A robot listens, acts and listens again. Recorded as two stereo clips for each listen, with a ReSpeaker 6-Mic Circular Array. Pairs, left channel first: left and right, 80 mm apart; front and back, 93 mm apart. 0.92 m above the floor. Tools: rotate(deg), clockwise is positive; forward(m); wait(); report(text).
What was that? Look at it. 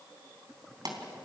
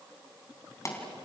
rotate(55)
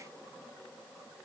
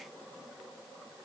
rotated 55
report("I heard a pop from this way, but can't make it out now.")